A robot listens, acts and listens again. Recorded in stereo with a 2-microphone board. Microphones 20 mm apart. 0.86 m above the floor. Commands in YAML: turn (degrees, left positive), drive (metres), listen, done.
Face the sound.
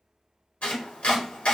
turn: 90
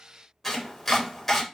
turn: 10
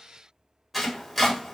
done: "Facing the chopping, 1 to 2 m away."